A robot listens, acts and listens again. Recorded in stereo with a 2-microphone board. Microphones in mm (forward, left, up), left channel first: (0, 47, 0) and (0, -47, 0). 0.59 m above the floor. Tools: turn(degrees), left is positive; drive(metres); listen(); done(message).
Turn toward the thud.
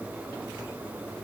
listen()
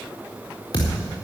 turn(degrees=45)
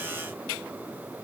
listen()
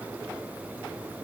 done("I heard a thud, but can't make it out now. It was about straight ahead or 90° left.")